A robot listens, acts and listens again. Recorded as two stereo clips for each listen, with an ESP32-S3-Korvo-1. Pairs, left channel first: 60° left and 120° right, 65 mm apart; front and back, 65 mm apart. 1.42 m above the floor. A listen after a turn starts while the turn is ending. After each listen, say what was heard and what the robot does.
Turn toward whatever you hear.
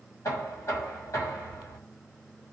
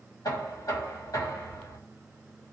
The knocking: 20° left. Turn 20° left.
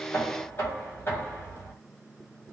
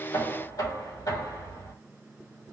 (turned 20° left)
The knocking is now 10° left. Turn 10° left.
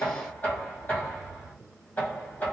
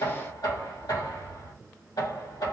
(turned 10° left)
Facing the knocking.